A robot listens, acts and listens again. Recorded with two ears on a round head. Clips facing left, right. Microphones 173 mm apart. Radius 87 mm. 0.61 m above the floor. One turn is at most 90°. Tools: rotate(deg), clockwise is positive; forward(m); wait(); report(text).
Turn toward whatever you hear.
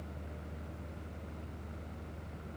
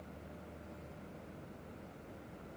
wait()
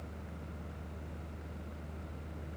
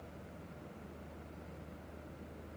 wait()
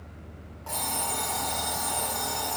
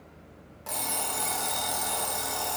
rotate(20)
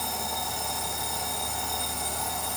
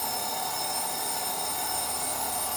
report("Facing the alarm clock.")